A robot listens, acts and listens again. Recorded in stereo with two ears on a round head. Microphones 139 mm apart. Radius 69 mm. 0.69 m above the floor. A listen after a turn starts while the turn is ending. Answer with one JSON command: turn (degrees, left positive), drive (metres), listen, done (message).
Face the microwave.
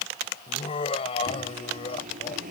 {"turn": -50}
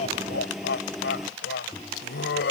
{"done": "Facing the microwave."}